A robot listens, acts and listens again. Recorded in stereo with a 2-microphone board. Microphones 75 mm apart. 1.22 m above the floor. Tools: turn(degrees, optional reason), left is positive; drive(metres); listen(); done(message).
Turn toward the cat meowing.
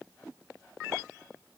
listen()
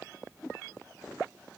listen()
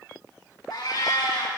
turn(degrees=90)
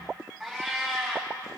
done("Facing the cat meowing, 2 to 4 m away.")